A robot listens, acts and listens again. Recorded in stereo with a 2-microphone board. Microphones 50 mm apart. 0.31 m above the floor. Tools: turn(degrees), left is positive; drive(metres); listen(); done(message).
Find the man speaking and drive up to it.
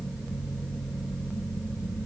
listen()
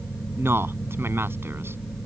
turn(degrees=-55)
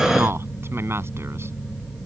turn(degrees=-65)
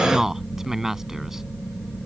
turn(degrees=-10)
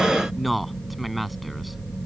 drive(metres=1.0)
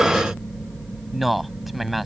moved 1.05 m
drive(metres=1.0)
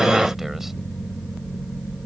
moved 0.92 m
listen()
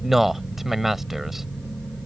turn(degrees=-10)
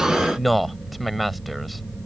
drive(metres=1.0)
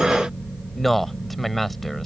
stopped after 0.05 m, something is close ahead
done("Arrived at the man speaking, straight ahead.")